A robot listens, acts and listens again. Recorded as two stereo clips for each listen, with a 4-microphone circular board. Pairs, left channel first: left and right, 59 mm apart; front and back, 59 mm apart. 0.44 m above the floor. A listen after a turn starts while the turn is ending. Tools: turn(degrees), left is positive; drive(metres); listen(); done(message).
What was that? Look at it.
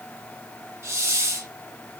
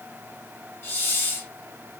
turn(degrees=-50)
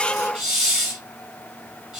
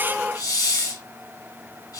turn(degrees=-15)
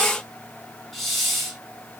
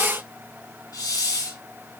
done("Found it: a hiss, straight ahead, under 1 m away.")